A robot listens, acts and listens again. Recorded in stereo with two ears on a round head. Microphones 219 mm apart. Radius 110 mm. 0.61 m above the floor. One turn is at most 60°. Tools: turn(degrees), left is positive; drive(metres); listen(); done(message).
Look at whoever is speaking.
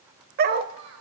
turn(degrees=-60)
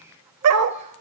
turn(degrees=-30)
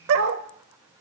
turn(degrees=-15)
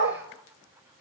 listen()
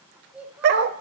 done("Facing the child speaking.")